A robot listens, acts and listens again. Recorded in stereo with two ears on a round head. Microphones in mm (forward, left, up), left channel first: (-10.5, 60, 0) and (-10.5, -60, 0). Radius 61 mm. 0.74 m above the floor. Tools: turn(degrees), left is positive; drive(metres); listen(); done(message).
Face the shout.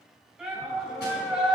turn(degrees=-30)
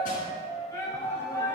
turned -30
turn(degrees=20)
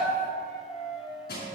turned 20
done("Found it: a shout, straight ahead, 2 to 4 m away.")